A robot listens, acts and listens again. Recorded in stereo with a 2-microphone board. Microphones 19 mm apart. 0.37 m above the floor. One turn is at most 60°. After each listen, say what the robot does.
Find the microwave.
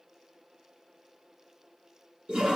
Keep listening.
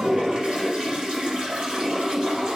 Keep listening.
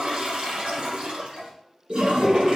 I can't make out a microwave, only a toilet flushing.